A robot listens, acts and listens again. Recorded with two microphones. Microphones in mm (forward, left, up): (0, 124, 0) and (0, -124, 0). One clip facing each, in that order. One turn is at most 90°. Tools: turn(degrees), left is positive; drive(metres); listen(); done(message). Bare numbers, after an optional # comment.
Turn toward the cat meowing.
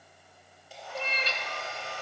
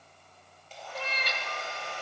# The cat meowing: about 25° left or 155° left.
turn(25)
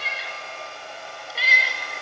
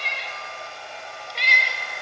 done("Found it: a cat meowing, straight ahead, under 1 m away.")